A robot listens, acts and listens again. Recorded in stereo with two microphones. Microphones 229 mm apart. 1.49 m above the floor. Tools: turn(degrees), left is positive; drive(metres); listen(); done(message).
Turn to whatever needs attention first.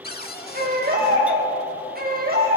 turn(degrees=-40)
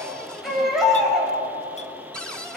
done("Facing the baby crying, over 4 m away.")